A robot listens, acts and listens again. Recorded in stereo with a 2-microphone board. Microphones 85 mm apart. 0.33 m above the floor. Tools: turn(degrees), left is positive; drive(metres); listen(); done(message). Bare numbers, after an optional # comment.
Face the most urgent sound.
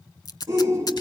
# The shout: about 35° right or 145° right.
turn(-35)
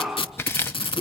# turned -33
done("Found it: a shout, straight ahead.")